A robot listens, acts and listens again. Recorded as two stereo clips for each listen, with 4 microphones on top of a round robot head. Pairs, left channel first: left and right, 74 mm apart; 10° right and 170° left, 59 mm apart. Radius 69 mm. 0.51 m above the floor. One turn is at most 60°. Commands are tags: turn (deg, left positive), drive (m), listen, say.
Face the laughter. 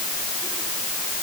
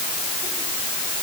<listen/>
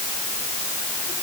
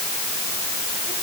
<listen/>
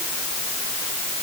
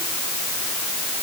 <say>I can't make out laughter to turn to.</say>